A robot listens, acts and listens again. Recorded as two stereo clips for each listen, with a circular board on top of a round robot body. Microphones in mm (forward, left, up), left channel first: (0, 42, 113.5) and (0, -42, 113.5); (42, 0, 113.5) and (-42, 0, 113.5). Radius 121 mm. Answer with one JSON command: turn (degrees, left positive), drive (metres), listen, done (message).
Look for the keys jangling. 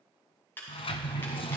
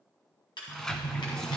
{"turn": 25}
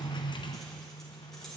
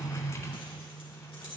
{"listen": true}
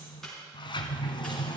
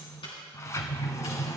{"listen": true}
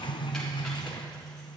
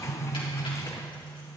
{"done": "I heard keys jangling from this way, but can't make it out now."}